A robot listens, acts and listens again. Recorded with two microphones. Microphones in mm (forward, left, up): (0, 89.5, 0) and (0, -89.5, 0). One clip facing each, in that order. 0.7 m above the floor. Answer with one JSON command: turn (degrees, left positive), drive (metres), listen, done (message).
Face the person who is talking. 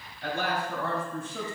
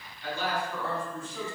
{"turn": 60}
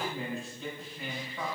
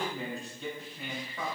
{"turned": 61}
{"done": "Found it: a man speaking, straight ahead."}